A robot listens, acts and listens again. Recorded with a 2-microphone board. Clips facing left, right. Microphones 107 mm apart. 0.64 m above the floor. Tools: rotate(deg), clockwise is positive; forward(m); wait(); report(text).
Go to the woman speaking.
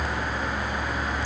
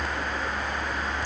wait()
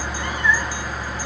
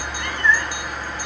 wait()
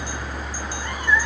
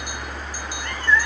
report("I can't make out a woman speaking to turn to.")